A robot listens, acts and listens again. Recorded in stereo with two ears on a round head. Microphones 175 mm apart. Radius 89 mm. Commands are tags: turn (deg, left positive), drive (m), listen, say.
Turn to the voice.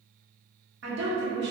<turn deg="-55"/>
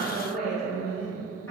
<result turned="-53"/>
<turn deg="15"/>
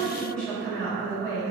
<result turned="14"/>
<turn deg="15"/>
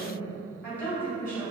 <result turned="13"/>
<turn deg="15"/>
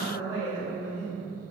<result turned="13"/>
<say>Found it: a woman speaking, straight ahead.</say>